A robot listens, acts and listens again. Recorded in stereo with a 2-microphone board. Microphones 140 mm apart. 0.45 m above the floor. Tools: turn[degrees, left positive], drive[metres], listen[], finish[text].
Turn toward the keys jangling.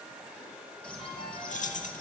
Thought: The keys jangling: about 60° left or 120° left.
Action: turn[60]
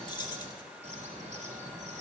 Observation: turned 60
Thought: So it is at 35° left.
Action: turn[35]
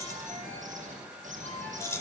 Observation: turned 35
Thought: The keys jangling is now 20° left.
Action: turn[20]
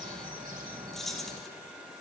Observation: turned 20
Action: finish[Facing the keys jangling.]